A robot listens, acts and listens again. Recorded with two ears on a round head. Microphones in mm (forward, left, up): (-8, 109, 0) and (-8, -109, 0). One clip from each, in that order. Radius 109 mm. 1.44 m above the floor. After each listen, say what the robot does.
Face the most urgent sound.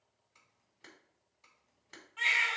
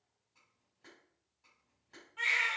Turn 20° left.
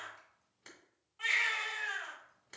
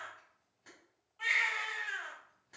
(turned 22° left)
Found it: a baby crying, straight ahead.